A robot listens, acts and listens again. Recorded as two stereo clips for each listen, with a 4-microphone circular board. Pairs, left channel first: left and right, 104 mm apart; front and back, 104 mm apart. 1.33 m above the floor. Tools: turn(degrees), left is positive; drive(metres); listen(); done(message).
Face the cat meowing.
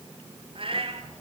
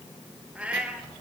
turn(degrees=-100)
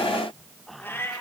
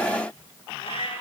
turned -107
turn(degrees=25)
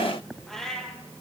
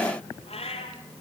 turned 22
done("Facing the cat meowing, 2 to 4 m away.")